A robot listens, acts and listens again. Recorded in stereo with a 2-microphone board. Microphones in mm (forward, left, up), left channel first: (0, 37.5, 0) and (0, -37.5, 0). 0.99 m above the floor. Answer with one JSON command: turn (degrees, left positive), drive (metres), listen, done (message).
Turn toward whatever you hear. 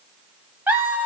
{"turn": -20}
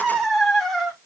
{"done": "Facing the laughter."}